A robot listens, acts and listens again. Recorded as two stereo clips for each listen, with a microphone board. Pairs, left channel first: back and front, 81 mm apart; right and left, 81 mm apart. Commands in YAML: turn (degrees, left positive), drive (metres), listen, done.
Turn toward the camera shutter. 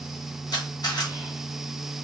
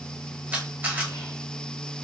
turn: 155
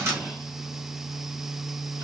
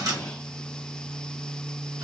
turn: 50
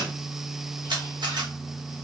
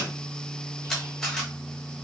turn: -10
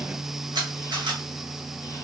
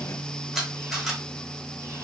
done: "Found it: a camera shutter, straight ahead."